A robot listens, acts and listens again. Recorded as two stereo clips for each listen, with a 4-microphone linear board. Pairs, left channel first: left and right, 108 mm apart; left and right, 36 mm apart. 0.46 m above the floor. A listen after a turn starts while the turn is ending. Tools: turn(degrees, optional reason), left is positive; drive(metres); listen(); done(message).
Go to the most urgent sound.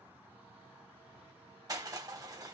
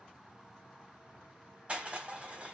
listen()
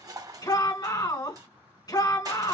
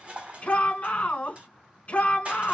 turn(degrees=40, reason="The shout: about 40° left or 140° left.")
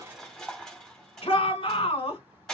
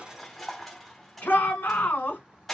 turn(degrees=95, reason="So it is at 95° left.")
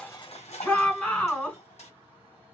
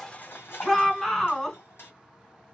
turn(degrees=10, reason="The shout is now 10° left.")
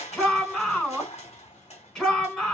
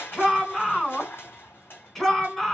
drive(metres=1.0)
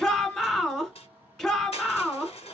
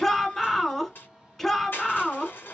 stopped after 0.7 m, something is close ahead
done("I am next to the shout.")